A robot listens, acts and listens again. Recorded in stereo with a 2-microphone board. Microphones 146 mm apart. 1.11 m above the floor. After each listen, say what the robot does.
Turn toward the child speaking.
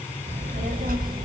Turn 90° right.
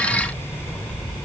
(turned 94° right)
Turn 10° left.
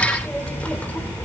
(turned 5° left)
Turn 15° left.
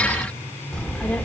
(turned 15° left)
Turn 10° left.
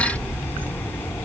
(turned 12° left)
Turn 15° left.
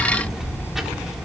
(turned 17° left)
Facing the child speaking.